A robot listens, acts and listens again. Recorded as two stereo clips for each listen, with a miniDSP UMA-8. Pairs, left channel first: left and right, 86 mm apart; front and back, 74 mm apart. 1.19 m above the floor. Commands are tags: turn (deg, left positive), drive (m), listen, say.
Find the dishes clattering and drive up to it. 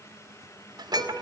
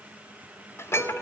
<turn deg="-55"/>
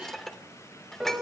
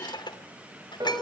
<drive m="1.0"/>
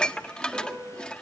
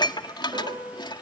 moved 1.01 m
<turn deg="10"/>
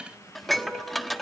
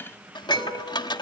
<drive m="1.0"/>
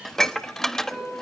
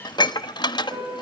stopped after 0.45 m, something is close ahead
<say>I am next to the dishes clattering.</say>